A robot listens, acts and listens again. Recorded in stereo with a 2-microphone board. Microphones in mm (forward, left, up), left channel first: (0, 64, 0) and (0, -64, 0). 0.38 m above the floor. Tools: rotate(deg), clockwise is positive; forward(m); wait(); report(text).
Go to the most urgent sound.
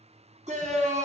rotate(65)
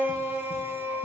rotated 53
rotate(20)
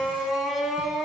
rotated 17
forward(1.0)
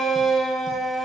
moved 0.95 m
forward(1.0)
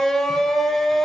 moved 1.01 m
forward(1.0)
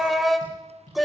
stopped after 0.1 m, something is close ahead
report("I am next to the shout.")